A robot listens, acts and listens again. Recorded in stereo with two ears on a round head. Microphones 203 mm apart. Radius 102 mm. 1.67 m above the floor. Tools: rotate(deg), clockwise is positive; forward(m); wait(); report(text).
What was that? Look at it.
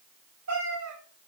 rotate(90)
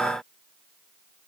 wait()
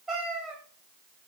report("Found it: a cat meowing, straight ahead, over 4 m away.")